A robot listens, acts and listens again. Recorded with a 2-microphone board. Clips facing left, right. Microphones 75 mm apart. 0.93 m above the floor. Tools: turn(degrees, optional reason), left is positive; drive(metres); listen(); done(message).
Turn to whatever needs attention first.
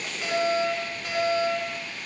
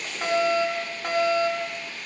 turn(degrees=-60, reason="The fire alarm: about 60° right or 120° right.")
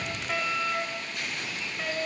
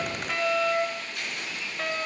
done("Facing the fire alarm.")